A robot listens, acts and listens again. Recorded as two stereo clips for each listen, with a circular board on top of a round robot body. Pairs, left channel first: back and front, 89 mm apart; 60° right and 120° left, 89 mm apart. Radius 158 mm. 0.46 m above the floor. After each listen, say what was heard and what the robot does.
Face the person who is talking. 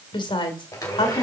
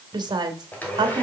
The woman speaking: 155° left. Turn 155° left.
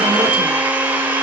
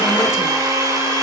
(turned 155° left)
Keep listening.
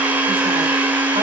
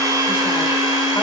Keep listening.
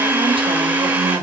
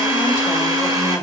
Facing the woman speaking, 2 to 4 m away.